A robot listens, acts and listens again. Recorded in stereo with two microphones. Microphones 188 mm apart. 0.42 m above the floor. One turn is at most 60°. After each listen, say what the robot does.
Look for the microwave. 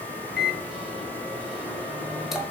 Turn 30° left.
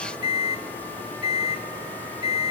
Turn 30° right.
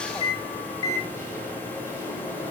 Turn 20° left.
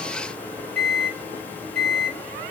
Found it: a microwave, straight ahead.